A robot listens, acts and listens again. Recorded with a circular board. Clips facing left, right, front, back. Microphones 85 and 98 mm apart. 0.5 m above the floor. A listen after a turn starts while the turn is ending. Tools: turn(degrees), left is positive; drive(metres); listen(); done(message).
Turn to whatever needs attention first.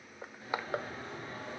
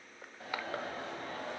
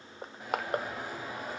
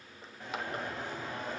turn(degrees=-80)
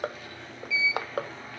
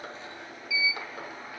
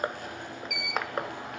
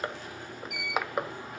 turn(degrees=-10)
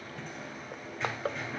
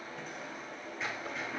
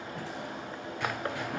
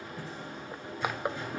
done("Facing the alarm, 2 to 4 m away.")